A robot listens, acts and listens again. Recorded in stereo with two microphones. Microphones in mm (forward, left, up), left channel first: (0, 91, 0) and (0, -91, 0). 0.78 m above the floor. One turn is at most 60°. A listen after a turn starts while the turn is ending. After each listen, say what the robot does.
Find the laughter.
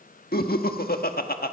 Turn 55° left.
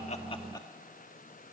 Keep listening.
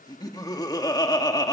Turn 25° left.
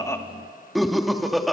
Found it: laughter, straight ahead, 1 to 2 m away.